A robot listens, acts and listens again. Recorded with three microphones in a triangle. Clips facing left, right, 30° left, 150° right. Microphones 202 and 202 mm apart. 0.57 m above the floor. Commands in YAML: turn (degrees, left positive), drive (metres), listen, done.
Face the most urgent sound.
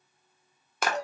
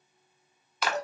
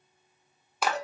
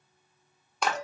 listen: true
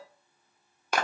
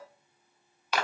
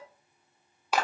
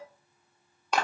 listen: true
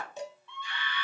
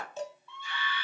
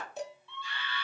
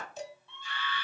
turn: -170
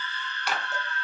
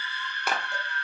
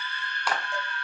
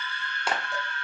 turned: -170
turn: -15
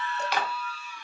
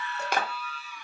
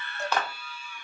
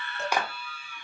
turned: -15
done: "Found it: a scream, straight ahead."